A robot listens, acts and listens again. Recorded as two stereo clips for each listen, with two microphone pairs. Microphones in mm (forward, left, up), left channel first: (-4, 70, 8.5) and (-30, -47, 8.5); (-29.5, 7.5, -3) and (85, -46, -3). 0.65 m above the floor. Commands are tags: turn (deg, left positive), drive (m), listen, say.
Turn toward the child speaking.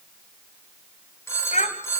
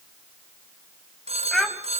<turn deg="70"/>
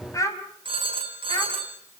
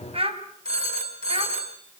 <turn deg="15"/>
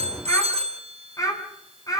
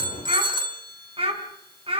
<turn deg="15"/>
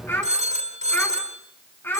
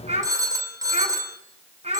<say>Found it: a child speaking, straight ahead, over 4 m away.</say>